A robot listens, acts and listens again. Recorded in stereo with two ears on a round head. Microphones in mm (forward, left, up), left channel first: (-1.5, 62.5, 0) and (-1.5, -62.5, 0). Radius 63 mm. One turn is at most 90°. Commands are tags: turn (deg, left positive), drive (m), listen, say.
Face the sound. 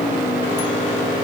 <listen/>
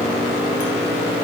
<listen/>
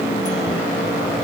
<say>I can't make out anything.</say>